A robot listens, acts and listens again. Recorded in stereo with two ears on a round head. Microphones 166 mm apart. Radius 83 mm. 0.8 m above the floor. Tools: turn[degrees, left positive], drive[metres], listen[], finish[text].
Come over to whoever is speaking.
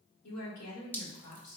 Thought: The woman speaking: about 70° left or 110° left.
Action: turn[70]
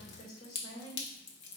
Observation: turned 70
Thought: So it is at 35° left.
Action: turn[35]
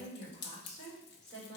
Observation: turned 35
Action: drive[1.0]
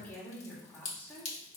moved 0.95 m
Thought: The woman speaking is now 10° left.
Action: turn[10]
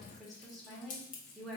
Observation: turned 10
Action: drive[1.0]
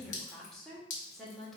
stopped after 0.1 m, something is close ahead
Action: finish[I am next to the woman speaking.]